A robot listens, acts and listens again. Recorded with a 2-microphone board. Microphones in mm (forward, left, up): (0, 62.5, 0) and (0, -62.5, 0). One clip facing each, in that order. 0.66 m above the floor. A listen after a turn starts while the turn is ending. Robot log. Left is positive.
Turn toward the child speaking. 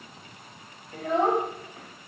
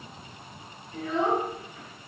note: The child speaking: about 45° left or 135° left.
cmd yaw +45
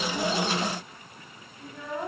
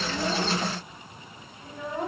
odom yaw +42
note: So it is at 25° right.
cmd yaw -25
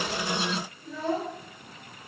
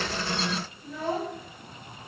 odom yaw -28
note: The child speaking is now 10° right.
cmd yaw -10
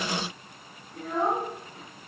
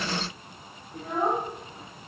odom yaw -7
note: The child speaking is now 15° right.
cmd yaw -15
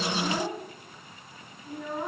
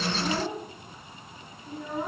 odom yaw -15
end: Found it: a child speaking, straight ahead.